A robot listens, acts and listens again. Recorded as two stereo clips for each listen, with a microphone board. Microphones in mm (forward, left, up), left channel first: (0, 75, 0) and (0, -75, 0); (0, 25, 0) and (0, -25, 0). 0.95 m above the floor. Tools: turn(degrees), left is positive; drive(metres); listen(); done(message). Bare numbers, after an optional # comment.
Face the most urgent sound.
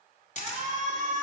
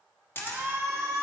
# The shout: about 50° right or 130° right.
turn(-50)
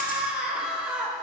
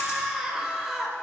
done("Found it: a shout, straight ahead, 1 to 2 m away.")